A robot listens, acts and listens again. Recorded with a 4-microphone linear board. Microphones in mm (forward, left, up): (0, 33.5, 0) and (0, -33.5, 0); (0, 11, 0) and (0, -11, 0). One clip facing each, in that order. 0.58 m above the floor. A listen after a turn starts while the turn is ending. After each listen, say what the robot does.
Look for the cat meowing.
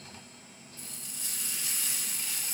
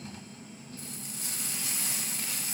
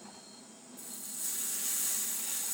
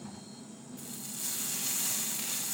Keep listening.
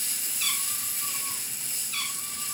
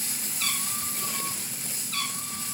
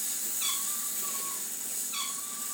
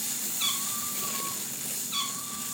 Turn 50° right.
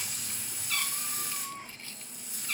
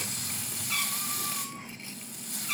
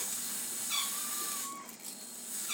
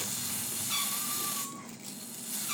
Turn 10° right.
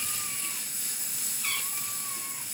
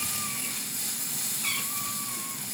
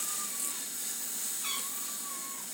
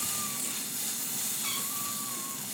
Keep listening.
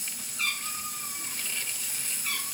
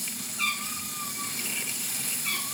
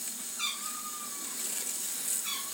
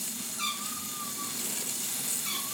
Found it: a cat meowing, straight ahead.